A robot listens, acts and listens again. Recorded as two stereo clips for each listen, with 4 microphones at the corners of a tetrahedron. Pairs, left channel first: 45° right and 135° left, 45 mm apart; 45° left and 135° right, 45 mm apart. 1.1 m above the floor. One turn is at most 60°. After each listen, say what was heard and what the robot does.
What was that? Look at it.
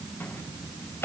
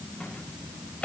The microwave: 15° right. Turn 15° right.
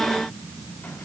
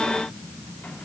Keep listening.
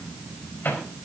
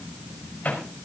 Found it: a microwave, straight ahead, over 4 m away.